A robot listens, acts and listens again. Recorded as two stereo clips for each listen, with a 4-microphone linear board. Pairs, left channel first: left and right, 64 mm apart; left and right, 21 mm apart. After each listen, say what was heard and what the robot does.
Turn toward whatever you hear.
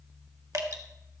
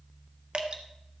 The dripping: about 60° right or 120° right. Turn 60° right.
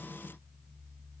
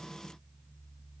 Keep listening.
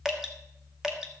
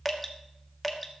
So it is at 10° right. Turn 10° right.
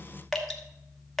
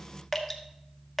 Facing the dripping, 1 to 2 m away.